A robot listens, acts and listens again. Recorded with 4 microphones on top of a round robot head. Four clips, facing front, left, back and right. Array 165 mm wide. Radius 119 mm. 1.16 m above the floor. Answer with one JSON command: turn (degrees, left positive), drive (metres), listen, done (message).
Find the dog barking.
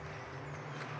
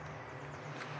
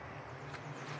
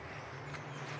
{"listen": true}
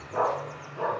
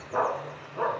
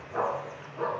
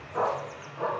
{"turn": 65}
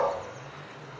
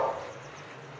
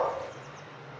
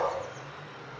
{"done": "Facing the dog barking, over 4 m away."}